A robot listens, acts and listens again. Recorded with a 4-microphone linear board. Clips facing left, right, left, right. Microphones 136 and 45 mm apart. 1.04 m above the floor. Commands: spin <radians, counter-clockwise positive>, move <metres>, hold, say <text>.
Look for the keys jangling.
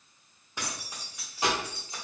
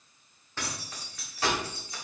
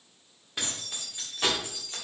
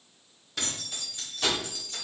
spin 0.44
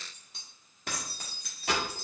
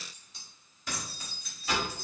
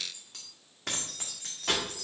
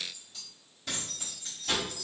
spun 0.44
spin 1.83
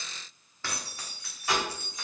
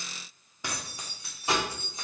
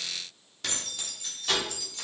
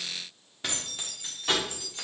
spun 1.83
spin -0.52
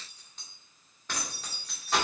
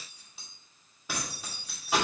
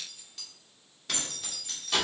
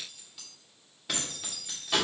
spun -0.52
spin -0.17
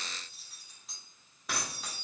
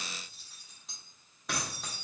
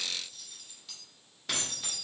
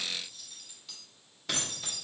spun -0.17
say Found it: keys jangling, straight ahead, 1 to 2 m away.